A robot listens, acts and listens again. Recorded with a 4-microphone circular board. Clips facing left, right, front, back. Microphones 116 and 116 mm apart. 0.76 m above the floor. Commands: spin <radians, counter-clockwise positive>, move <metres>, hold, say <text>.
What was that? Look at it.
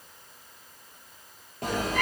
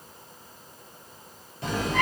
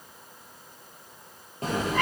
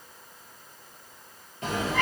spin 0.87
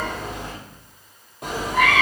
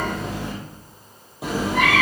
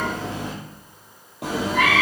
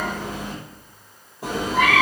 say Facing the cat meowing, 2 to 4 m away.